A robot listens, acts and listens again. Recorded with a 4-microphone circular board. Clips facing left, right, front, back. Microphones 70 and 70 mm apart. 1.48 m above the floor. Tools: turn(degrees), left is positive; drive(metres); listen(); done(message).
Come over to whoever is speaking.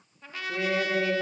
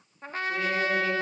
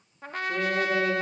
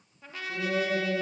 turn(degrees=15)
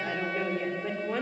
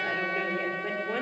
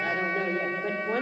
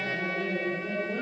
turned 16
drive(metres=1.0)
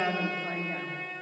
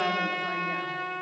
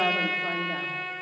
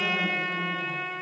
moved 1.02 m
drive(metres=1.0)
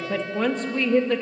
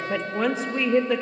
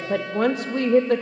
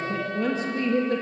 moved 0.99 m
drive(metres=1.0)
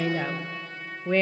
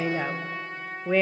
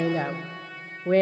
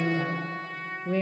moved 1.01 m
drive(metres=1.0)
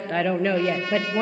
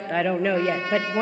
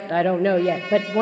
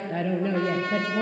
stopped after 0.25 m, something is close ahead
done("I am next to the woman speaking.")